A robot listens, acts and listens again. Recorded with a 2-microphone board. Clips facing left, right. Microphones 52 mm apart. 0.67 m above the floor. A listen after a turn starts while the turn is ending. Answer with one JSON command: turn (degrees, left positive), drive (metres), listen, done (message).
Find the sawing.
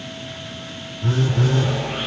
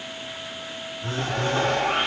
{"turn": -60}
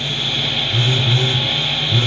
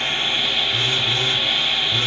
{"done": "Facing the sawing, 1 to 2 m away."}